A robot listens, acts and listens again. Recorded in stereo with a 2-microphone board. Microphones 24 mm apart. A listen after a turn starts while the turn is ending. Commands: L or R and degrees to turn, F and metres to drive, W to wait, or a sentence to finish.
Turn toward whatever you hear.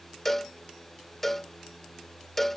L15
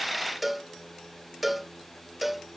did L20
Found it: a cowbell, straight ahead.